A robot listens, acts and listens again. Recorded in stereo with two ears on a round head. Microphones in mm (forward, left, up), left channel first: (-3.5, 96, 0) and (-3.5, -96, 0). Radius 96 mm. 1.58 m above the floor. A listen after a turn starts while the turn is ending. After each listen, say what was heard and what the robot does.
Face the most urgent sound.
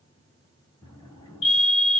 The fire alarm: about 60° left or 120° left. Turn 60° left.
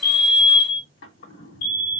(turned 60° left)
So it is at 55° left. Turn 55° left.
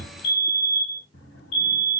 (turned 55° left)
The fire alarm is now 35° left. Turn 35° left.
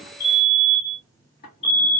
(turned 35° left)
Facing the fire alarm.